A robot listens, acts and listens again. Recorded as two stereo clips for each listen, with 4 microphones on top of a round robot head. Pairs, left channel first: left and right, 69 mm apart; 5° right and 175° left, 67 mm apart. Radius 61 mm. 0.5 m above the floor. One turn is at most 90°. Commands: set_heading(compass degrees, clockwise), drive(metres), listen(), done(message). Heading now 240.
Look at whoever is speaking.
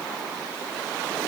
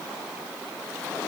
listen()
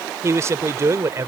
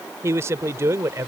set_heading(330)
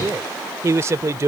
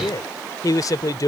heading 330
set_heading(10)
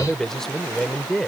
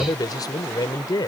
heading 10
done("Facing the man speaking.")